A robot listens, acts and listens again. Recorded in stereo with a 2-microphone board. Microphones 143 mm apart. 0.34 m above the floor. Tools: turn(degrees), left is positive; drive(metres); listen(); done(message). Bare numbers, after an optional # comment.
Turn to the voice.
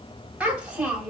turn(-30)
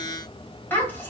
# So it is at 15° left.
turn(15)
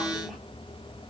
listen()
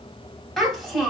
done("Facing the child speaking.")